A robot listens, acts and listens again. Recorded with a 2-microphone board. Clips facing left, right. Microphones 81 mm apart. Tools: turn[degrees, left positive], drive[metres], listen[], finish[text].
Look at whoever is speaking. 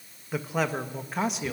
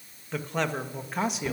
Action: turn[-30]
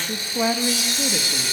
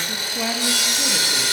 Thought: So it is at 20° left.
Action: turn[20]
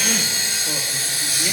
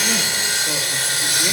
Action: listen[]
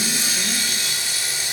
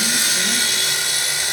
Action: listen[]
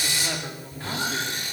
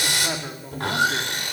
Thought: The man speaking is now 20° right.
Action: turn[-20]
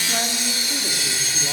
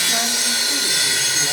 Action: listen[]
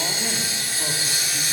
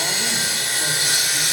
Action: listen[]
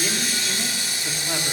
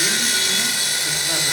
Action: finish[Facing where the man speaking came from. I can't hear it now.]